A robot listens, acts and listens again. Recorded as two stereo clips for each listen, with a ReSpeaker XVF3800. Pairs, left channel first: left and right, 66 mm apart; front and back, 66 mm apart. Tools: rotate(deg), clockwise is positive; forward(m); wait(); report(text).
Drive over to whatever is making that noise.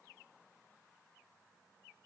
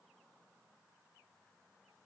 wait()
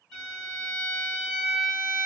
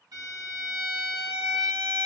rotate(-165)
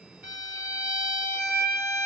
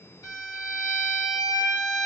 rotate(25)
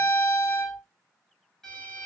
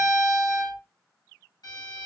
forward(1.0)
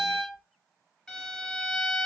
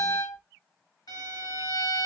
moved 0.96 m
forward(1.0)
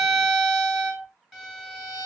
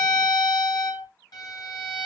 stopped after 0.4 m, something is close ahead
report("I am next to the violin.")